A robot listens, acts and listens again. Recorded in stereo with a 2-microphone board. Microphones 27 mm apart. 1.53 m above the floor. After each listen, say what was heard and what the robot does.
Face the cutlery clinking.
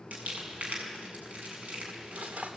The cutlery clinking: about 70° right or 110° right. Turn 70° right.
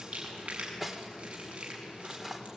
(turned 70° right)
So it is at 15° right. Turn 15° right.
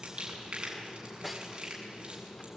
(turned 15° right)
Facing the cutlery clinking, 2 to 4 m away.